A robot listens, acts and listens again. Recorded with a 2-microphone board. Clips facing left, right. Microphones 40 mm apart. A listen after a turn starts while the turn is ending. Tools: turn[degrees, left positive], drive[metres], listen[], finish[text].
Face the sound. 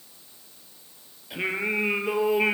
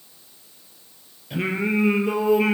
Action: turn[30]
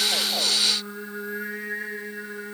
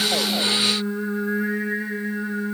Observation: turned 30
Action: finish[Found it: singing, straight ahead, over 4 m away.]